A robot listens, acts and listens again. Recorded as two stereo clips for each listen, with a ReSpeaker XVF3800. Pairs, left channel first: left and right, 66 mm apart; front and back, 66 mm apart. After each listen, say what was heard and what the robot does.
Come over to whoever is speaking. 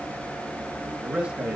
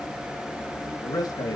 The man speaking: 15° right. Turn 15° right.
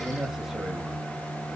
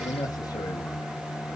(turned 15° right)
Drive 1.0 m forward.
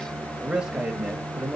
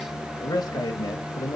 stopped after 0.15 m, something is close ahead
The man speaking is now 15° right. Turn 15° right.
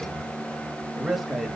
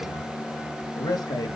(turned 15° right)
Blocked. The man speaking is further on, straight ahead.